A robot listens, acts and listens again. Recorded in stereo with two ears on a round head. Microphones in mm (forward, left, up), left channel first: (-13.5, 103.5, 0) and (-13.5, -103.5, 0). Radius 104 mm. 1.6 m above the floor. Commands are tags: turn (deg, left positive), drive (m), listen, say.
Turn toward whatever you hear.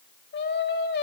<turn deg="50"/>
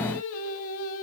<turn deg="65"/>
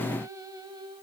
<turn deg="-20"/>
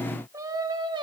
<turn deg="-20"/>
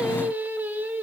<turn deg="-10"/>
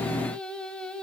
<say>Facing the singing, 1 to 2 m away.</say>